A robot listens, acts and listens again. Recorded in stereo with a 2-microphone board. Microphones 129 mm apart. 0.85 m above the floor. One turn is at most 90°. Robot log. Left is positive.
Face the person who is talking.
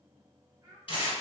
note: The child speaking: about 20° right or 160° right.
cmd yaw -20
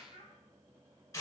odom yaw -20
note: So it is at 140° right.
cmd yaw -90
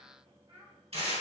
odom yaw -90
note: The child speaking is now 55° right.
cmd yaw -55
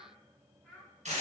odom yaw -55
end: Found it: a child speaking, straight ahead.